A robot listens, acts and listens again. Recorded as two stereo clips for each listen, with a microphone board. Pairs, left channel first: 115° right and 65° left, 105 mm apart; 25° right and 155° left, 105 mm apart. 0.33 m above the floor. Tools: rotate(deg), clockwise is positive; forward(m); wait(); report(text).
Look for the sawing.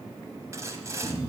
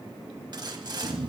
rotate(-125)
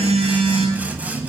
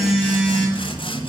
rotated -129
wait()
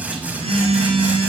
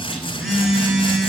wait()
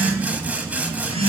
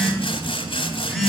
report("Found it: sawing, straight ahead.")